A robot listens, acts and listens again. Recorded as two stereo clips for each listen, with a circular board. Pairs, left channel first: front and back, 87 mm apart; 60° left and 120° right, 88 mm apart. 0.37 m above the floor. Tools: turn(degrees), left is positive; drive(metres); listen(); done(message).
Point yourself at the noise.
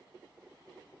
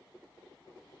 listen()
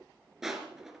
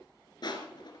turn(degrees=95)
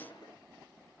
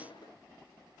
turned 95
listen()
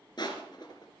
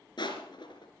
turn(degrees=30)
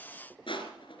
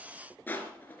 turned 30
done("Found it: crushing, straight ahead.")